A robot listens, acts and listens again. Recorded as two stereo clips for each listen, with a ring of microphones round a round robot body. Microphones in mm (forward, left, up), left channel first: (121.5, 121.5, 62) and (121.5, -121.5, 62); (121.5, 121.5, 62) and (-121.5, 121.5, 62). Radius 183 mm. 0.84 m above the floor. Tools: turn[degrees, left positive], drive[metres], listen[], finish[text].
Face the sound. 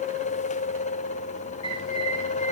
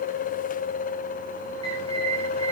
Thought: The bird: 115° left.
Action: turn[115]
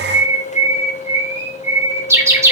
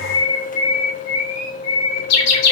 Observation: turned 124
Thought: The bird is now 10° right.
Action: turn[-10]
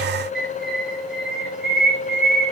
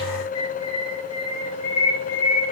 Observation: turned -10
Action: finish[Facing the bird, over 4 m away.]